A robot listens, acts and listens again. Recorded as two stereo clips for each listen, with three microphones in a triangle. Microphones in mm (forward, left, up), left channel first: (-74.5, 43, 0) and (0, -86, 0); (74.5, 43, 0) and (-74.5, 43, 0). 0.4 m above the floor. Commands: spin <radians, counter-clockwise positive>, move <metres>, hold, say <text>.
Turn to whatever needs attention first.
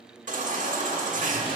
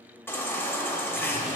spin -1.31
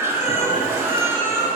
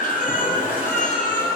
spin 0.17
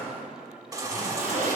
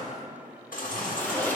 say Found it: a baby crying, straight ahead.